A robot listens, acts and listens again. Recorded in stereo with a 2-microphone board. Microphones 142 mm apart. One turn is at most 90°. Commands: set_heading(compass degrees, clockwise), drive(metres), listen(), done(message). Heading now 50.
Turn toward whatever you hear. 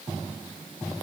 listen()
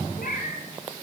set_heading(320)
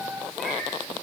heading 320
done("Facing the cat meowing.")